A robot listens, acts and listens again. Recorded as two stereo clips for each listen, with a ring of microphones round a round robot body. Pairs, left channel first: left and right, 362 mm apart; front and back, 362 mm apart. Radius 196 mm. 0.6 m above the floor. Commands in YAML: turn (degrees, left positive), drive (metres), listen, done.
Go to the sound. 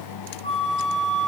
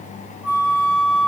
turn: 160
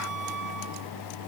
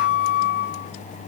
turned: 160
turn: -40
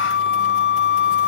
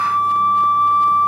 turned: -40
turn: -20
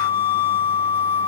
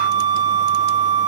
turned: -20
turn: 10
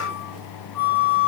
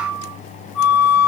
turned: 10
drive: 1.0
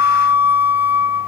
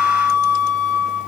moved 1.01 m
turn: -10
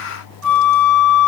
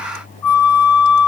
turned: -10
drive: 1.0
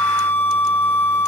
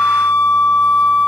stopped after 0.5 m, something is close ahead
turn: 10
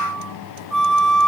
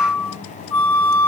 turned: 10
done: "I am next to the flute."